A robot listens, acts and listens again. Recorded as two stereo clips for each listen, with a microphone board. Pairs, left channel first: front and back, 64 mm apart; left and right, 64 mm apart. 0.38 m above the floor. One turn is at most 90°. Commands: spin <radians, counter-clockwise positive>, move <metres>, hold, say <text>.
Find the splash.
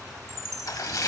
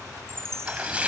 spin -0.35
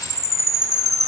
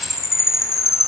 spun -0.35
say I heard a splash from this way, but can't make it out now.